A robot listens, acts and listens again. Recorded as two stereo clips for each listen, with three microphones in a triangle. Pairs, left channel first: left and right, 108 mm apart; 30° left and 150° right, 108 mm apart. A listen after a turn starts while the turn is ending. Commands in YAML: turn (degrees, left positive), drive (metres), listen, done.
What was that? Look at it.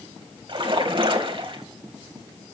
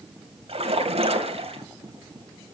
turn: -125
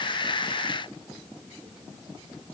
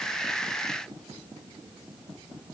done: "Facing where the splash came from. I can't hear it now."